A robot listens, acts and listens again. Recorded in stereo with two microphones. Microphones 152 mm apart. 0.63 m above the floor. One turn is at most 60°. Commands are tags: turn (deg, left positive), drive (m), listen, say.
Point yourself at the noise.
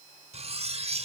<turn deg="-45"/>
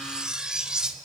<say>Facing the cutlery clinking.</say>